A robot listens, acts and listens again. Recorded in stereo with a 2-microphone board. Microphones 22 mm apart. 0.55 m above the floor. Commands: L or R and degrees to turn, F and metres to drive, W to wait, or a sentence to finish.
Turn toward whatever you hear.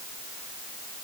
W
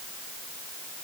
W
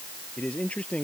L90
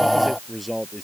Facing the man speaking.